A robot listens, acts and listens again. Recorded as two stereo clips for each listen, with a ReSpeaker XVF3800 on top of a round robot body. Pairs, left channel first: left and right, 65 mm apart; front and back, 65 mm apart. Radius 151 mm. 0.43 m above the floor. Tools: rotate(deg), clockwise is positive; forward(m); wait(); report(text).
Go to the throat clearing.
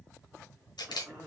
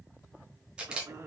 rotate(145)
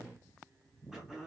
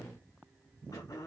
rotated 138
forward(1.0)
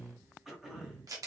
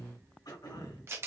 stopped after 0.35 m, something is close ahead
report("Something is in my way. I am facing the throat clearing but have not reached it.")